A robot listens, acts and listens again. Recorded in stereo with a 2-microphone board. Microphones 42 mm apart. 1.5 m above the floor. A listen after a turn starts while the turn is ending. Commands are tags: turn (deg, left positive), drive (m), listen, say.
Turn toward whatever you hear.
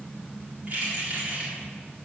<turn deg="-35"/>
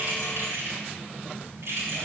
<turn deg="-105"/>
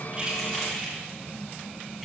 <say>Facing the keys jangling.</say>